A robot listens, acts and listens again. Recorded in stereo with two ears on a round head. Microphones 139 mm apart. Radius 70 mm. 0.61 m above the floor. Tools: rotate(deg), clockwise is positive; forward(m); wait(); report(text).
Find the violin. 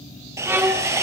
rotate(30)
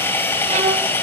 wait()
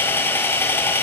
wait()
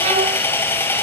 rotate(130)
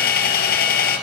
wait()
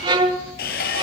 rotate(35)
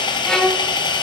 report("Found it: a violin, straight ahead, 1 to 2 m away.")